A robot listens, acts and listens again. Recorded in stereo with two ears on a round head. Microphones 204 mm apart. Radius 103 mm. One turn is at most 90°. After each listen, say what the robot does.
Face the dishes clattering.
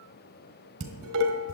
Turn 60° right.
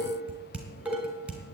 Facing the dishes clattering.